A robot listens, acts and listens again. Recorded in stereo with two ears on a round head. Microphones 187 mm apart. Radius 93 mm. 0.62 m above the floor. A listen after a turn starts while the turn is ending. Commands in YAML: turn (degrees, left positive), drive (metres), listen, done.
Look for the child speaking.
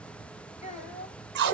turn: 30
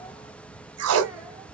listen: true
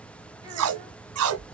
listen: true
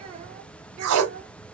turn: -40
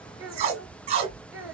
turn: -10
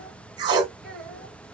done: "Facing the child speaking."